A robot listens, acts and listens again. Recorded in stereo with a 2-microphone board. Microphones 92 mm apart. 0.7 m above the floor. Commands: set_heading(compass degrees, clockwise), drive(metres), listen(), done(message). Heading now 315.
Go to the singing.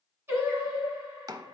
set_heading(340)
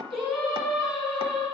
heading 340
drive(1.0)
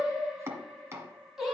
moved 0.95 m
drive(1.0)
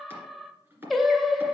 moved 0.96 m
drive(1.0)
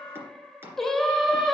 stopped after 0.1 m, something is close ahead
done("I am next to the singing.")